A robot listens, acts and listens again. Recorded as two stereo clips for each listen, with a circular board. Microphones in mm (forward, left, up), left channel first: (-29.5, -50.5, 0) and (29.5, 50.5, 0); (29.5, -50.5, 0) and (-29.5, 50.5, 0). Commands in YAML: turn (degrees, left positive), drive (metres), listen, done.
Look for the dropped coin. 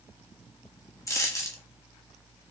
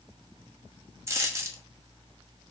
turn: 180
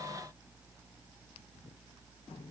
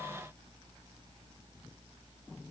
done: "Facing where the dropped coin came from. I can't hear it now."